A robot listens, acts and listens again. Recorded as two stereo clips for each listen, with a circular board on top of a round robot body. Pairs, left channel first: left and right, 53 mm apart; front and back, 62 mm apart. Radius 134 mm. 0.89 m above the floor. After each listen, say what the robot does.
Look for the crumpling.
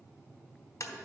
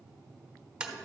Keep listening.
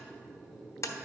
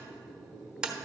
Keep listening.
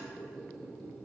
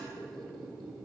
I can't make out crumpling, only a squeak and tapping.